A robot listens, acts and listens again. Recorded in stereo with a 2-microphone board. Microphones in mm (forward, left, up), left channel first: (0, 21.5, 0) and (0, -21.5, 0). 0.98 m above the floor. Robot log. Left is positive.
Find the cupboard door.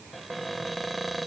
cmd yaw +30
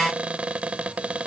note: So it is at 30° right.
cmd yaw -30
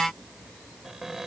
end: Found it: a cupboard door, straight ahead.